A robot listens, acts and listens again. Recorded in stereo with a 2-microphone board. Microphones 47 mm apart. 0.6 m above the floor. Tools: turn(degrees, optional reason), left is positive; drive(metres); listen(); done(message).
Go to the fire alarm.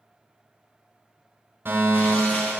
turn(degrees=-55, reason="The fire alarm: about 55° right or 125° right.")
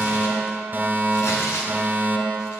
turn(degrees=-55, reason="So it is at 55° right.")
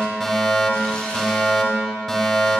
turn(degrees=10, reason="The fire alarm is now 10° left.")
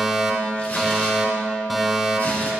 drive(metres=1.0)
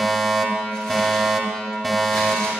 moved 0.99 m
drive(metres=1.0)
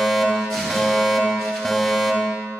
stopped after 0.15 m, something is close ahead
turn(degrees=10, reason="The fire alarm is now 10° left.")
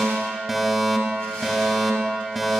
done("Arrived at the fire alarm, straight ahead.")